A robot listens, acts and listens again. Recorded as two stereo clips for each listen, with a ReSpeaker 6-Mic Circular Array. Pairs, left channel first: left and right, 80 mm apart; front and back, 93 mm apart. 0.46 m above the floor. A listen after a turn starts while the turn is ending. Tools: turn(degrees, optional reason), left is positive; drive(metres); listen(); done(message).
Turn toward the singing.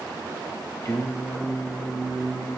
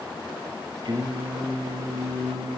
turn(degrees=145, reason="The singing: 145° left.")
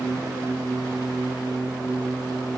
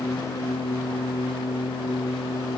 turn(degrees=-20, reason="The singing is now 20° right.")
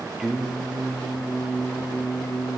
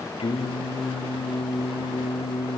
done("Found it: singing, straight ahead, over 4 m away.")